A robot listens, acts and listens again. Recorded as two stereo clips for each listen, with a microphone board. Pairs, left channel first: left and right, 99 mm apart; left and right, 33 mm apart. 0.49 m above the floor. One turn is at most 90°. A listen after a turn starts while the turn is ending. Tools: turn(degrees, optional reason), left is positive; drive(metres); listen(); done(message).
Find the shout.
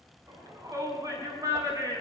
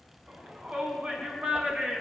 turn(degrees=-35, reason="The shout: about 35° right or 145° right.")
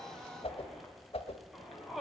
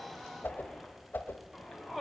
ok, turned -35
done("Facing the shout, over 4 m away.")